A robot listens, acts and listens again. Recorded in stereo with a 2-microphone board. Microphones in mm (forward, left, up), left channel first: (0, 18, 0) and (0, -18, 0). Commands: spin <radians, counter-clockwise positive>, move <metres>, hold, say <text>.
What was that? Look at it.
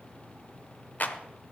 spin 0.87
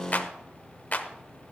spin 1.05
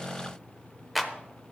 say Found it: a clap, straight ahead.